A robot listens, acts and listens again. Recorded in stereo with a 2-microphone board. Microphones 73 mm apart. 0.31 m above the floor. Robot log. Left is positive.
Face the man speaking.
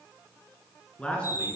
cmd yaw +30
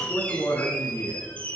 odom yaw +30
note: So it is at 135° left.
cmd yaw +135
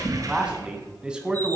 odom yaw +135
note: The man speaking is now 10° right.
cmd yaw -10
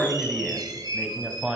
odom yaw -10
end: Found it: a man speaking, straight ahead, 1 to 2 m away.